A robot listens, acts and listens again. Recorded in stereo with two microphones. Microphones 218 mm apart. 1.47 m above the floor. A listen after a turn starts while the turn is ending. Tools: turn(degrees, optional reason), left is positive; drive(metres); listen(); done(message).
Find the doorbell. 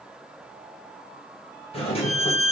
turn(degrees=25, reason="The doorbell: about 25° left or 155° left.")
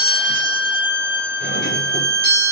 turn(degrees=130, reason="So it is at 130° left.")
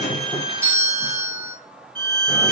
turn(degrees=-10, reason="The doorbell is now 10° right.")
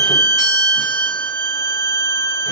listen()
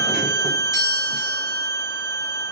listen()
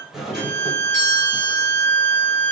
done("Facing the doorbell.")